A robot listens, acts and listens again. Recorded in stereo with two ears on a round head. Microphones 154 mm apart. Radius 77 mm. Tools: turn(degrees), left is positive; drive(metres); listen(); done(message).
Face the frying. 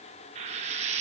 turn(degrees=-40)
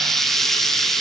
done("Found it: frying, straight ahead.")